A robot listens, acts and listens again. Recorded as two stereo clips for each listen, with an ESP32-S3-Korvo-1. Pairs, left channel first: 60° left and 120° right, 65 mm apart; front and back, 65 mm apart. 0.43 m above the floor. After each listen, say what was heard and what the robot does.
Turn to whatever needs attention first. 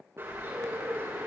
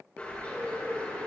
Keep listening.
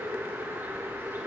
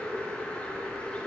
Keep listening.
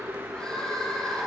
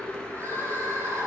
The crying: 135° left. Turn 135° left.
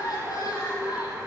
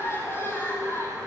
The crying is now 45° left. Turn 45° left.
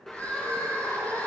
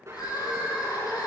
The crying is now 10° right. Turn 10° right.
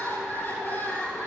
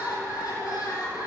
Found it: crying, straight ahead, over 4 m away.